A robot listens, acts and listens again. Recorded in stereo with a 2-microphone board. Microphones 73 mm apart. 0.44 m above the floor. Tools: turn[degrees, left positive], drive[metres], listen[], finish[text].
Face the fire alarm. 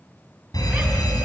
Thought: The fire alarm: about 70° left or 110° left.
Action: turn[70]
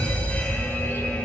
Thought: So it is at 25° left.
Action: turn[25]
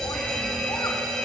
Action: finish[Found it: a fire alarm, straight ahead, over 4 m away.]